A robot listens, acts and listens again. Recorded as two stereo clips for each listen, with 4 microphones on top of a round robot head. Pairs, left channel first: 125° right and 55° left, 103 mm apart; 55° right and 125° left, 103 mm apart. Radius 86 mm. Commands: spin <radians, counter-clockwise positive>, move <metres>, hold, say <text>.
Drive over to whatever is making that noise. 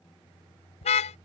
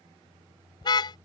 spin -1.83
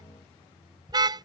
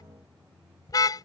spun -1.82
move 1.0
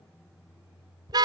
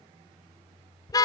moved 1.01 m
move 1.0
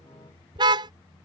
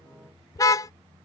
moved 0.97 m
move 1.0
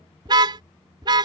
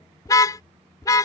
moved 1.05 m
move 1.0
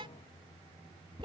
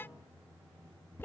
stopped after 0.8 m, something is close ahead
spin 0.26
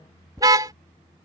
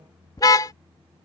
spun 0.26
say Arrived at the car horn, straight ahead.